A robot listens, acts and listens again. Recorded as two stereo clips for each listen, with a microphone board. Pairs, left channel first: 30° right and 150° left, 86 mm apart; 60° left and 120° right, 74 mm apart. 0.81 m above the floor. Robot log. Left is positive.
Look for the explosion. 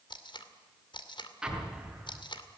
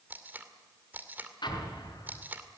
note: The explosion: 65° left.
cmd yaw +65
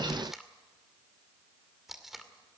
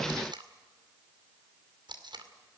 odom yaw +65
end: Facing where the explosion came from. I can't hear it now.